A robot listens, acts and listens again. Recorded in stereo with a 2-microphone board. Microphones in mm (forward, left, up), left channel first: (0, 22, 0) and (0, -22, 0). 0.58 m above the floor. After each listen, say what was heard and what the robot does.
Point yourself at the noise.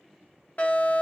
The fire alarm: about 40° left or 140° left. Turn 40° left.
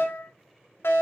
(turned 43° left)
So it is at 95° left. Turn 95° left.
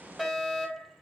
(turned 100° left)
Facing the fire alarm, 2 to 4 m away.